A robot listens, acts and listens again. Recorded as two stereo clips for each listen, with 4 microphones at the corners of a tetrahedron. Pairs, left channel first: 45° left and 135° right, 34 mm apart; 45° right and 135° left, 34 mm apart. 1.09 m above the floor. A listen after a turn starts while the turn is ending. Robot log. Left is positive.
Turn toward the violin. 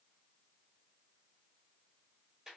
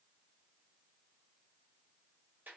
cmd idle
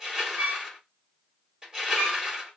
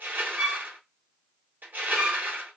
note: The violin: 145° right.
cmd yaw -145
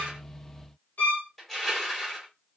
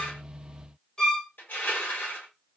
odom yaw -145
note: The violin is now 20° left.
cmd yaw +20
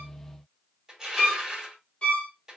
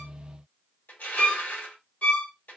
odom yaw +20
end: Found it: a violin, straight ahead, under 1 m away.